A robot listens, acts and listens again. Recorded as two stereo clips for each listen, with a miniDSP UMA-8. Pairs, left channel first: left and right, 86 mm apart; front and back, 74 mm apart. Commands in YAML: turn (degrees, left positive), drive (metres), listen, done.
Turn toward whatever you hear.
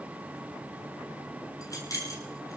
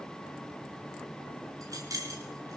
turn: 140
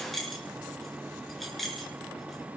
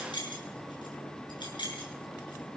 done: "Found it: keys jangling, straight ahead."